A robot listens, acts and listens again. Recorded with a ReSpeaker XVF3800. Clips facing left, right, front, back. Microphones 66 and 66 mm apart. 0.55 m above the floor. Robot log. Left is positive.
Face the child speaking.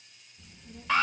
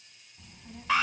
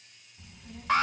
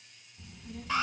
note: The child speaking: 75° right.
cmd yaw -75
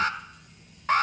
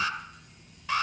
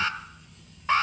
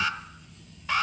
note: The child speaking is now 20° right.
cmd yaw -20
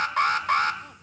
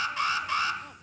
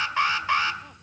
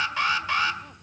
cmd idle
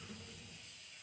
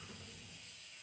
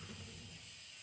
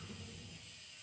end: Facing the child speaking.